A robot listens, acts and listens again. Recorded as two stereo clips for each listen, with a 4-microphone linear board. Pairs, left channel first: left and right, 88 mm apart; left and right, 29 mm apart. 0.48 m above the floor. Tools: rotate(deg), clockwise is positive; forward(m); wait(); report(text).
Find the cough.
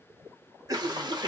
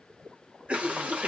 rotate(40)
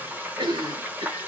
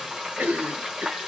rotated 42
rotate(90)
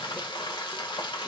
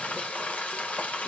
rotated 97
rotate(-10)
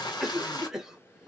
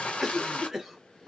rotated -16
report("Found it: a cough, straight ahead.")